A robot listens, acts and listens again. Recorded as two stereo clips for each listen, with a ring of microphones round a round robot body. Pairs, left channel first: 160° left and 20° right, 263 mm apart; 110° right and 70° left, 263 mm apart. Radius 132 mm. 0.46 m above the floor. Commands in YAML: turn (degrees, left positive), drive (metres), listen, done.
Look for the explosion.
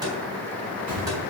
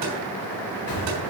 turn: -80
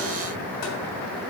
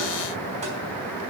done: "Facing where the explosion came from. I can't hear it now."